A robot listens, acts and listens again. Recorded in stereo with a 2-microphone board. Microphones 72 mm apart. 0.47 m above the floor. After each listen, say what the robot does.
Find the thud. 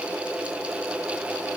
Keep listening.
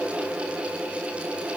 Keep listening.
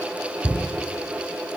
Turn 60° right.
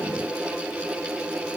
Keep listening.
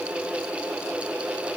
I heard a thud, but can't make it out now. It was about straight ahead or 60° right.